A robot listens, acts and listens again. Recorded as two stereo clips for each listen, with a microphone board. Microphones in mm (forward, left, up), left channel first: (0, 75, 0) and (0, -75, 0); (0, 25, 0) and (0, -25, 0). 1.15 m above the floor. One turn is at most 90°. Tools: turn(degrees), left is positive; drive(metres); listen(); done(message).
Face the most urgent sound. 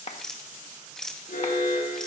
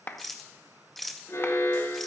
turn(degrees=90)
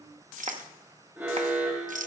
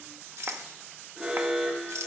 turn(degrees=-15)
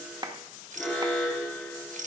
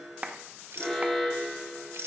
done("Facing the alarm, 2 to 4 m away.")